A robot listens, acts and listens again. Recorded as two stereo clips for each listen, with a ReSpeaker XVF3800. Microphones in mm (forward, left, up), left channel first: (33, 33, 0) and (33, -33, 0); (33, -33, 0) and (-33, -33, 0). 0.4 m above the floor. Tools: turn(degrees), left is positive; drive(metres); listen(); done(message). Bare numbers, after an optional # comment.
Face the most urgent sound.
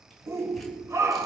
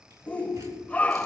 # The shout: 65° right.
turn(-65)
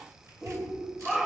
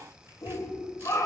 # The shout is now 10° right.
turn(-10)
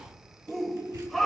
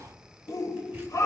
done("Found it: a shout, straight ahead, 1 to 2 m away.")